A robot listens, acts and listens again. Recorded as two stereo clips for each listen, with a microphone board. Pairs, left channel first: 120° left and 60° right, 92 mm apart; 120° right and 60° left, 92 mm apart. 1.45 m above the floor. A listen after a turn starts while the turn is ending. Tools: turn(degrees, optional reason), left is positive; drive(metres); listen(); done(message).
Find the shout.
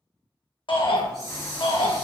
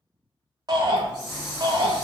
turn(degrees=100, reason="The shout: 100° left.")
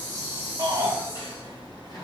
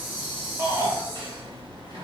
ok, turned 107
done("Facing the shout, under 1 m away.")